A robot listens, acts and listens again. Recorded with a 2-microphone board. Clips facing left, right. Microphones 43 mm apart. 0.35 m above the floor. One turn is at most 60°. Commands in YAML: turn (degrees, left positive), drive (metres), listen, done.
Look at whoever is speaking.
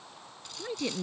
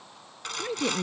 turn: -15
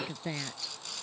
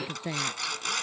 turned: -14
turn: -30
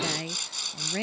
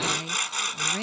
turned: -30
turn: 15
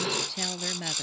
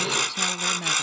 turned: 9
done: "Facing the woman speaking."